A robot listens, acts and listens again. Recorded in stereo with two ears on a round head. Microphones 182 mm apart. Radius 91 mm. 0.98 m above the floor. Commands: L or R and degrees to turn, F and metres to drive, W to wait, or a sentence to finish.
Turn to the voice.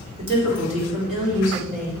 R40
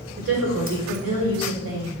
R100
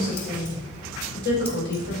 L55
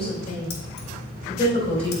L30
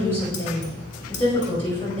L10
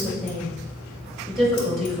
Found it: a woman speaking, straight ahead, over 4 m away.